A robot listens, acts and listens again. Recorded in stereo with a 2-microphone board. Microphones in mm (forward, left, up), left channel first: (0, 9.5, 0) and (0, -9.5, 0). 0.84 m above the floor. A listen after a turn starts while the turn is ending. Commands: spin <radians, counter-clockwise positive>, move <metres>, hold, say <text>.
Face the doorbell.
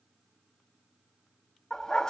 hold
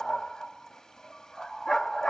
hold
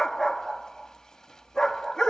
say I can't make out a doorbell to turn to.